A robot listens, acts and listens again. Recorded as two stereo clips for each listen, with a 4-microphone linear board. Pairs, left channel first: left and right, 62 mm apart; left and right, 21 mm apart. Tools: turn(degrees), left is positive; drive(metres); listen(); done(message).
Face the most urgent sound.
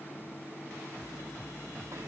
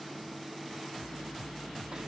listen()
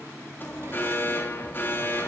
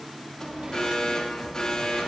turn(degrees=35)
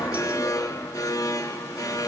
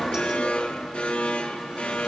turn(degrees=110)
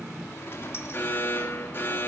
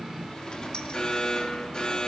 turn(degrees=35)
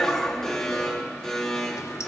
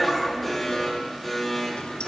done("Facing the alarm, 2 to 4 m away.")